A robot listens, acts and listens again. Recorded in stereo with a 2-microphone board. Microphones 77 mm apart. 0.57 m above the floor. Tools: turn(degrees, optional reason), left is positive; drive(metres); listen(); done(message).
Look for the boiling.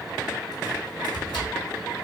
listen()
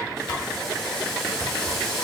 turn(degrees=30)
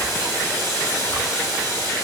turn(degrees=145, reason="So it is at 145° left.")
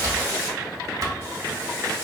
turn(degrees=35, reason="The boiling is now 35° left.")
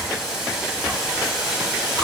done("Found it: boiling, straight ahead, 1 to 2 m away.")